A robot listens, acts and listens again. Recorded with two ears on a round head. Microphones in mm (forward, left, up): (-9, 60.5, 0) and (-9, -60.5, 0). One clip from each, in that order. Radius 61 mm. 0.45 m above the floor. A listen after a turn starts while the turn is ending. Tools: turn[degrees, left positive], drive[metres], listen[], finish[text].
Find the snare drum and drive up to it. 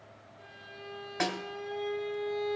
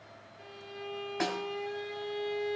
Thought: The snare drum: about 20° left or 160° left.
Action: turn[20]
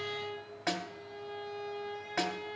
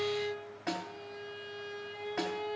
Thought: So it is at 140° left.
Action: turn[140]
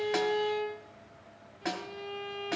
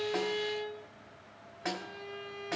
Action: drive[1.0]
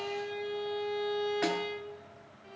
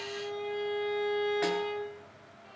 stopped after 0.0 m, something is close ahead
Action: listen[]
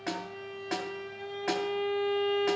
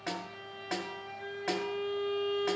Action: finish[Blocked. The snare drum is further on, straight ahead.]